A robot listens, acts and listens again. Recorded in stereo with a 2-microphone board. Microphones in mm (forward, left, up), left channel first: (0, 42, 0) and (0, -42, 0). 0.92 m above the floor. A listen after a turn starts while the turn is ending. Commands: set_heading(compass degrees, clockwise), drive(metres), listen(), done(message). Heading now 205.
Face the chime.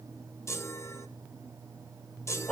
set_heading(170)
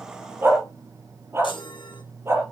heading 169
set_heading(59)
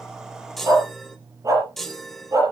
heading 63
done("Found it: a chime, straight ahead, 1 to 2 m away.")